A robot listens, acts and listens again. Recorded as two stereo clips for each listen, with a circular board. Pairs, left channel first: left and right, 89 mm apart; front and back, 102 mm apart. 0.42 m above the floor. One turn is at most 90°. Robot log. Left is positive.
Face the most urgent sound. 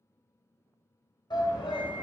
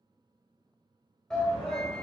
note: The shout: 85° left.
cmd yaw +85
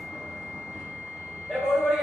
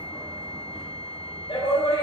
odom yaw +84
end: Found it: a shout, straight ahead, 1 to 2 m away.